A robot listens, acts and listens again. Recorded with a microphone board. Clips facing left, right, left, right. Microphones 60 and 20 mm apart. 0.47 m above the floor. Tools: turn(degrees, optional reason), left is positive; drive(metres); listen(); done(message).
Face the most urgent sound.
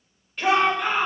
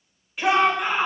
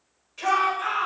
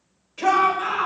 turn(degrees=-30)
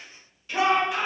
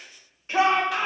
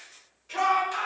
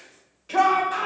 turn(degrees=-145, reason="So it is at 145° right.")
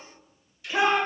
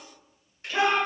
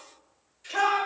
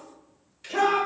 turn(degrees=20, reason="The shout is now 20° left.")
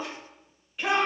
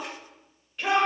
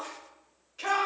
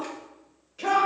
done("Facing the shout, 1 to 2 m away.")